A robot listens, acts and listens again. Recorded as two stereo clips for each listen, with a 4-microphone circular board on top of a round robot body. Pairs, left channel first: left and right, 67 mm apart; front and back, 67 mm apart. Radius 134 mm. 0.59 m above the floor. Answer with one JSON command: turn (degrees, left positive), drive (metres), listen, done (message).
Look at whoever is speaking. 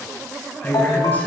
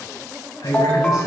{"turn": 25}
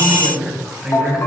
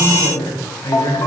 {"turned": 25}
{"turn": -15}
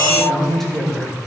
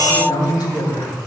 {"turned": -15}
{"done": "Found it: a woman speaking, straight ahead, over 4 m away."}